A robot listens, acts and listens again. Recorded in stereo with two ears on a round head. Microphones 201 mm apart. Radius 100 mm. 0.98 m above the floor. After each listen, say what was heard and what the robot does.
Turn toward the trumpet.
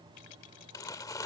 Keep listening.
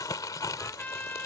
Turn 30° left.
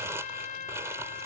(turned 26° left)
So it is at 145° left. Turn 145° left.
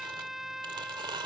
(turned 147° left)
Found it: a trumpet, straight ahead.